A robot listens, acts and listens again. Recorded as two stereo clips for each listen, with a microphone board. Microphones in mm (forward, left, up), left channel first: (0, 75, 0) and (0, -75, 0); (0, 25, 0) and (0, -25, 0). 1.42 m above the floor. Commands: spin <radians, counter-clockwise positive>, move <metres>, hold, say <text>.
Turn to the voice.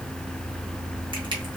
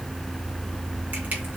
hold
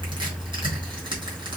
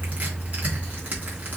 hold
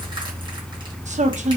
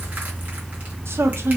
spin -0.96
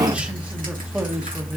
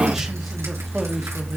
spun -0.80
hold
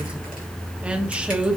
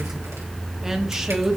spin -0.17
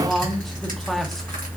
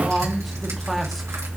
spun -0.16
say Facing the man speaking.